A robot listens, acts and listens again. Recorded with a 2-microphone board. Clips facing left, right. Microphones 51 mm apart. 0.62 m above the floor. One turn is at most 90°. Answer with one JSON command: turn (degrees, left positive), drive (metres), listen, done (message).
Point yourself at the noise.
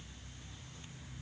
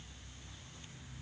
{"listen": true}
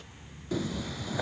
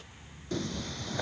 {"turn": 30}
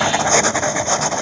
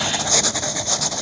{"turn": 90}
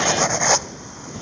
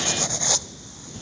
{"turn": 50}
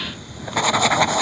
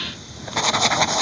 {"turn": 10}
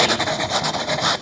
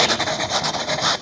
{"done": "Facing the writing."}